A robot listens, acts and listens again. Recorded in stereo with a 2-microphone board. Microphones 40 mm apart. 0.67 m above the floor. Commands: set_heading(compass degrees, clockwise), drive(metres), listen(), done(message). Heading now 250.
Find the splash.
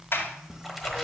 set_heading(280)
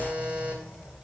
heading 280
listen()
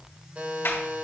done("I heard a splash, but can't make it out now. It was about 25° left or 145° right.")